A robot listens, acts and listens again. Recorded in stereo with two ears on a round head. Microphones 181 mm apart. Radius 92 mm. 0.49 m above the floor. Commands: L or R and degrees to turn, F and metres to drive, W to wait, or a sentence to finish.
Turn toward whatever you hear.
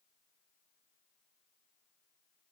W
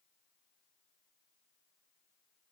W
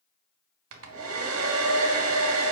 R75
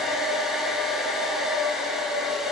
Facing the hair dryer, 1 to 2 m away.